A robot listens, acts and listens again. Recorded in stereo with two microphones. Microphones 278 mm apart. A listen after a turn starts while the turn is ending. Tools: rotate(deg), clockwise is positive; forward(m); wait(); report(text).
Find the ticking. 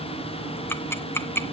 rotate(-30)
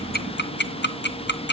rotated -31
rotate(-140)
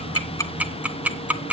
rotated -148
report("Found it: ticking, straight ahead.")